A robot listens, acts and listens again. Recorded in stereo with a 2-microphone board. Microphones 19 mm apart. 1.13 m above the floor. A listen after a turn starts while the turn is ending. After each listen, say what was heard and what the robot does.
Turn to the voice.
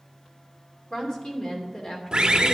The woman speaking: about 50° left or 130° left. Turn 50° left.
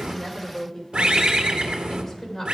So it is at 15° left. Turn 15° left.
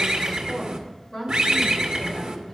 Facing the woman speaking.